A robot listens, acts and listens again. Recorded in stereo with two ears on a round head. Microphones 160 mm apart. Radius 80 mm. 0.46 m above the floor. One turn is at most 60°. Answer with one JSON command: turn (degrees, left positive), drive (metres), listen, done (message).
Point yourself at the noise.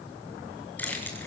{"turn": 30}
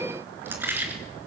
{"turn": -10}
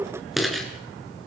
{"done": "Facing the keys jangling."}